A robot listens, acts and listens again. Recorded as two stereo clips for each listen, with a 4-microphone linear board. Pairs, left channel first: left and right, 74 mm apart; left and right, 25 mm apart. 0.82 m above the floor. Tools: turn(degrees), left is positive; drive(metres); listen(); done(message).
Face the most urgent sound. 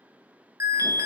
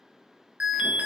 turn(degrees=-50)
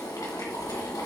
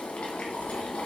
listen()
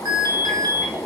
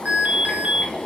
turn(degrees=-80)
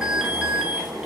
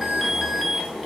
turn(degrees=-10)
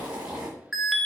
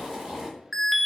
done("Found it: an alarm, straight ahead, under 1 m away.")